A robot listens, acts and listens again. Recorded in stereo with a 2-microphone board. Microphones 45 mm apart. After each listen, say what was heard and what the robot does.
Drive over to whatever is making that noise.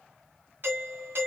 The doorbell: about 55° right or 125° right. Turn 55° right.
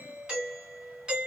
So it is at 20° right. Turn 20° right.
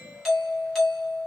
Drive 1.0 m forward.
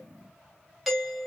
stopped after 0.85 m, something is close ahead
Arrived at the doorbell, straight ahead.